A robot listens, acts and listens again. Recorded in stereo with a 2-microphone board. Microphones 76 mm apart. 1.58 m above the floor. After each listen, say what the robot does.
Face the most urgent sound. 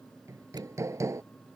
Keep listening.
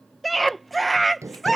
Turn 30° left.
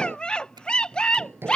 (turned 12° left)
Turn 165° left.
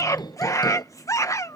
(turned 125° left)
Turn 45° left.
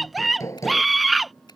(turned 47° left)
Facing the scream.